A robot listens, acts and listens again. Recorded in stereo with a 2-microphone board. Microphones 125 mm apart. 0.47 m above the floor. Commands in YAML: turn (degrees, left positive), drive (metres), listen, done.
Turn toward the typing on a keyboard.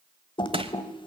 turn: 40
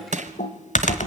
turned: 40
turn: 95
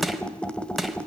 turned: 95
turn: 10
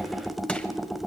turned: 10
done: "Facing the typing on a keyboard, 1 to 2 m away."